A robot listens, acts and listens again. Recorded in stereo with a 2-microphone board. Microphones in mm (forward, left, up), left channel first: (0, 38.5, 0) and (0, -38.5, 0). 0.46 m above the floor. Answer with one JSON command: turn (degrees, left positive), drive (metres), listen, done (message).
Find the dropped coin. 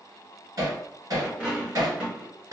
{"turn": -30}
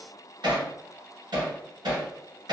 {"listen": true}
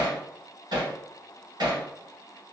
{"done": "I heard a dropped coin, but can't make it out now. It was about 20° left or 140° right."}